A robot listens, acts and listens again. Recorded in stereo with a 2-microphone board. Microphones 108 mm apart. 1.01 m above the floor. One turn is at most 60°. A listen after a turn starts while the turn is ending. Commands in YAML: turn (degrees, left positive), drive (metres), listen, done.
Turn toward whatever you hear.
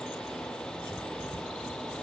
listen: true
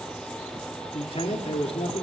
turn: 60
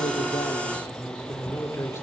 turn: 25
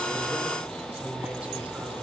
turn: -15
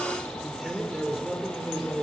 done: "Facing the man speaking."